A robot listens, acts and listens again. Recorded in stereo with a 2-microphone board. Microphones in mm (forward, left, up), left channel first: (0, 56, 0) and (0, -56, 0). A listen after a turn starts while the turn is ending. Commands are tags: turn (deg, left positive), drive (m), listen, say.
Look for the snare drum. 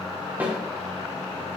<turn deg="-15"/>
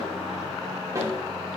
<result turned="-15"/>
<turn deg="-150"/>
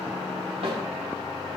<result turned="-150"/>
<turn deg="-55"/>
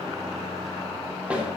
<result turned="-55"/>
<turn deg="-10"/>
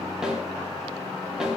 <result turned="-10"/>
<say>Found it: a snare drum, straight ahead.</say>